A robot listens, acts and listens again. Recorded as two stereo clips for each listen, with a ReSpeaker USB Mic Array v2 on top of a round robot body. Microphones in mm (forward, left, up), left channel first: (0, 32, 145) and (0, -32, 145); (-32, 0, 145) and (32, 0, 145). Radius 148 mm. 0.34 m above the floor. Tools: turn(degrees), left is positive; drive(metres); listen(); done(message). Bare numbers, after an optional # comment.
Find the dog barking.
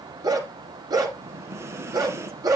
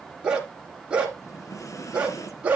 # The dog barking: 70° right.
turn(-70)
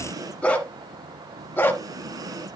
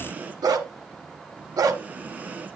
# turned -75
# The dog barking is now 30° left.
turn(30)
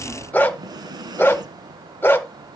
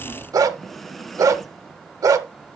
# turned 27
# The dog barking is now 30° left.
turn(30)
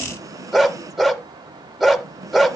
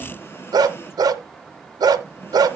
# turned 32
done("Facing the dog barking, 1 to 2 m away.")